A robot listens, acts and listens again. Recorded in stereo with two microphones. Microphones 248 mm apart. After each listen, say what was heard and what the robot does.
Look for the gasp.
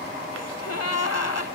Turn 90° left.
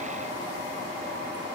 Facing where the gasp came from. I can't hear it now.